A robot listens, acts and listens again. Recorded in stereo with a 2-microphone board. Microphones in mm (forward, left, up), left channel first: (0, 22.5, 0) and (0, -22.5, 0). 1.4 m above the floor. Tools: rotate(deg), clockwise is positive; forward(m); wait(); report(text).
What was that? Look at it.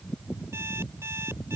rotate(90)
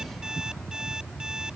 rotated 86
rotate(15)
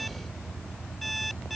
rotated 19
report("Found it: an alarm clock, straight ahead.")